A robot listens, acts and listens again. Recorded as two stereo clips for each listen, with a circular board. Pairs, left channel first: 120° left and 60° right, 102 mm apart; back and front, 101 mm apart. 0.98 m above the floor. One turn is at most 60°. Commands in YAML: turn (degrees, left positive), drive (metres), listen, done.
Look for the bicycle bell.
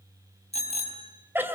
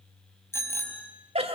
turn: 60
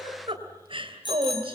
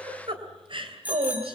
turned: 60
turn: 60
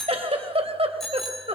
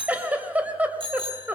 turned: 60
turn: 30
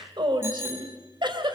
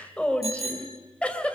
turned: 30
done: "Found it: a bicycle bell, straight ahead."